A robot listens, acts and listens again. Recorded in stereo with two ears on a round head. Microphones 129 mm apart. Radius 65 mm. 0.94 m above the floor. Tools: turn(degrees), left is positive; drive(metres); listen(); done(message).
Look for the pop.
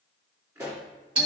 turn(degrees=-20)
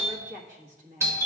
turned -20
listen()
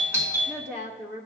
done("I heard a pop, but can't make it out now. It was about straight ahead or 140° right.")